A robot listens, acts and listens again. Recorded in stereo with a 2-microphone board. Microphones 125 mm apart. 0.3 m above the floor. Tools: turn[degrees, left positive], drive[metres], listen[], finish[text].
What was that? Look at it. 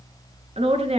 Thought: The woman speaking: about 55° right or 125° right.
Action: turn[-55]
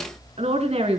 Thought: So it is at 55° right.
Action: turn[-55]
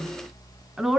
Action: finish[Found it: a woman speaking, straight ahead, 2 to 4 m away.]